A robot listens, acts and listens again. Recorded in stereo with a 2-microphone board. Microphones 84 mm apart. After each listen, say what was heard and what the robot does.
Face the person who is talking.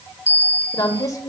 The woman speaking: about 40° left or 140° left. Turn 40° left.
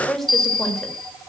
Found it: a woman speaking, straight ahead, 1 to 2 m away.